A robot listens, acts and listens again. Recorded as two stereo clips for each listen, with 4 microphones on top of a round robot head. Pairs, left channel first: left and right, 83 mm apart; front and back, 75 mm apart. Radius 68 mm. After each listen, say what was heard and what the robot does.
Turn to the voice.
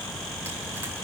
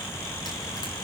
Keep listening.
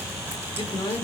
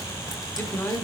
The man speaking: 55° left. Turn 55° left.
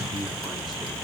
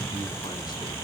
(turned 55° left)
Keep listening.
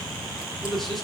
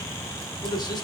Found it: a man speaking, straight ahead, 1 to 2 m away.